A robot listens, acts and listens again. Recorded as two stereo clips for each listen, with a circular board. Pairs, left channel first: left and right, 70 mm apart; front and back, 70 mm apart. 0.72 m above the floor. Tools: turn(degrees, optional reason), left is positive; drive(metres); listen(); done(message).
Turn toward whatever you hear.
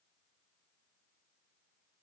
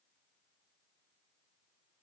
listen()
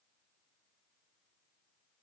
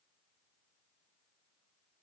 listen()
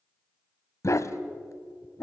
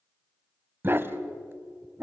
turn(degrees=125, reason="The dog barking: 125° left.")
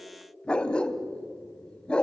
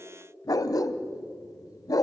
turn(degrees=15, reason="The dog barking is now 15° left.")
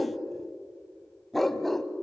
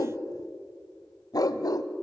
done("Found it: a dog barking, straight ahead.")